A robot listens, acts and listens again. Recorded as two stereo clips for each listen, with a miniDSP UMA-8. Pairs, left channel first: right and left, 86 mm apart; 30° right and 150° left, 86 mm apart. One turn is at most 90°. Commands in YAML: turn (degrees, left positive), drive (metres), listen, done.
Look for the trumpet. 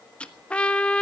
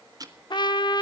turn: -15
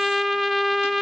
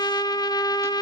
done: "Facing the trumpet."